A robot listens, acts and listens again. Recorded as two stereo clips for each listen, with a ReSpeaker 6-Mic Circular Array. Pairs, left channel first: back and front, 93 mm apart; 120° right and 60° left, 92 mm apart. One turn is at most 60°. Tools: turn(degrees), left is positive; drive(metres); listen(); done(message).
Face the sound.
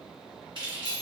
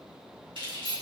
turn(degrees=30)
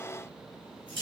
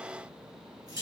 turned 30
turn(degrees=15)
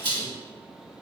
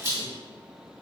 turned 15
done("Facing the keys jangling, 1 to 2 m away.")